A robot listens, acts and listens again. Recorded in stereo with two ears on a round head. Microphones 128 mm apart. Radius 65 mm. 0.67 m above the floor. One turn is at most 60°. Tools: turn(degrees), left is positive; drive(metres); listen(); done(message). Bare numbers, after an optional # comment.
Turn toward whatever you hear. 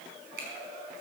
turn(-60)
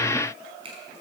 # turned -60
# So it is at 40° right.
turn(-40)
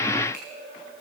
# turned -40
listen()
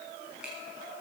listen()
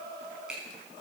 done("Facing the finger snap, over 4 m away.")